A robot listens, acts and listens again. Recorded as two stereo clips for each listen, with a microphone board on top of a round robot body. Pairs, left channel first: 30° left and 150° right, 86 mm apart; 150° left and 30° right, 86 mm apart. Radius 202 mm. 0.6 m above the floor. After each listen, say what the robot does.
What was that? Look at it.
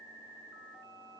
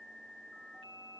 Keep listening.
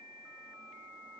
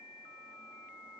Keep listening.
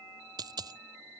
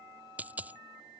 Turn 105° right.
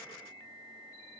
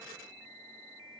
I heard a dropped coin from this way, but can't make it out now.